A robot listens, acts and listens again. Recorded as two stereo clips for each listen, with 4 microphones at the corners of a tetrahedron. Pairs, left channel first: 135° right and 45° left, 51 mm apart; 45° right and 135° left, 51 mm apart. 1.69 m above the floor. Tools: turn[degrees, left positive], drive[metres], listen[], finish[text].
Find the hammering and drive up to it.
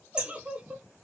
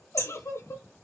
Thought: The hammering: 115° left.
Action: turn[115]
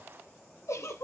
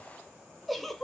Action: listen[]
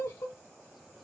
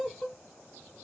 Action: listen[]
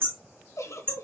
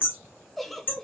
Action: drive[1.0]
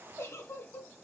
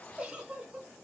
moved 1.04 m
Action: listen[]
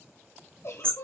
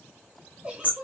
Action: drive[1.0]
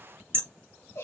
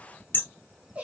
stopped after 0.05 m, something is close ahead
Action: finish[I am next to the hammering.]